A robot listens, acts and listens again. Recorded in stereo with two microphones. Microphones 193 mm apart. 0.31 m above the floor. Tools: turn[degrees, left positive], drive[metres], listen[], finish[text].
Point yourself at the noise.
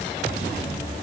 Action: listen[]
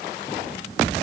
Action: listen[]
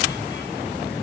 Action: finish[I can't make out anything.]